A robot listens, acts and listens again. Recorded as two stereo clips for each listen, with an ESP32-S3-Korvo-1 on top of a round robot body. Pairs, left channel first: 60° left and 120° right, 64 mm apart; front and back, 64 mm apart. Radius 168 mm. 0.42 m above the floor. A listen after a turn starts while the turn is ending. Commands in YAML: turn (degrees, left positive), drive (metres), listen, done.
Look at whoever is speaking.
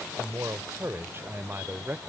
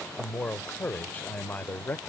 turn: -65
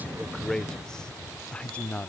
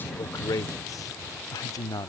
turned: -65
done: "Facing the man speaking."